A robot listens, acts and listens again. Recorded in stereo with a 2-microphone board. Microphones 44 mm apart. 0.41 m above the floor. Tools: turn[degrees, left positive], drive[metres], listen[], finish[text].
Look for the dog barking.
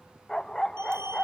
Action: turn[30]
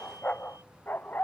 Thought: So it is at 135° left.
Action: turn[135]
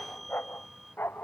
Thought: The dog barking is now 50° left.
Action: turn[50]
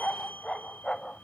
Thought: The dog barking is now 15° left.
Action: turn[15]
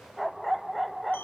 Action: finish[Facing the dog barking.]